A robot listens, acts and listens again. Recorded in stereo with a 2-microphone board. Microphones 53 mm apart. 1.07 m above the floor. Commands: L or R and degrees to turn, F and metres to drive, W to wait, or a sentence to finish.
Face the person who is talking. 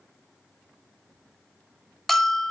W
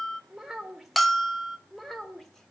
L30
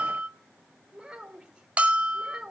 Found it: a child speaking, straight ahead, 2 to 4 m away.